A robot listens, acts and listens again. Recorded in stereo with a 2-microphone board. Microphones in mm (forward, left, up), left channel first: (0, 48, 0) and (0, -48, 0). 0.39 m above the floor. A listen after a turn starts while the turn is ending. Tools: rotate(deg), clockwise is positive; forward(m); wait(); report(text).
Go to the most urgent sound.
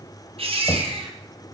rotate(90)
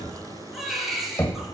forward(1.0)
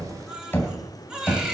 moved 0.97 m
rotate(10)
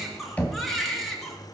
forward(1.0)
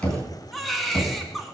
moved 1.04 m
forward(1.0)
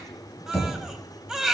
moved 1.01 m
forward(1.0)
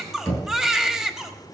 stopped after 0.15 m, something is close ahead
report("I am next to the baby crying.")